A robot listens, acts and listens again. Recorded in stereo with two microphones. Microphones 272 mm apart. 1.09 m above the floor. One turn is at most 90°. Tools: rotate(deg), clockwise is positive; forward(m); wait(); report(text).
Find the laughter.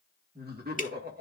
rotate(40)
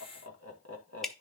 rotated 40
rotate(90)
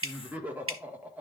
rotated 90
report("Found it: laughter, straight ahead, 1 to 2 m away.")